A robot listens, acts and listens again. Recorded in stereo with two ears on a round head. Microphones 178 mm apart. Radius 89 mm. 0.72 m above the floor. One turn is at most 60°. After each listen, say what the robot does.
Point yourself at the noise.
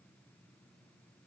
Keep listening.
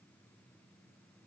Keep listening.
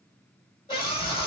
Turn 25° left.
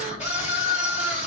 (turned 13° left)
Turn 60° left.
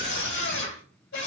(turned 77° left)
Turn 60° left.
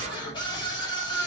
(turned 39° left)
Turn 25° left.
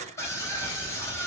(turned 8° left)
Turn 15° left.
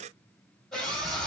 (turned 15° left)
Found it: a scream, straight ahead.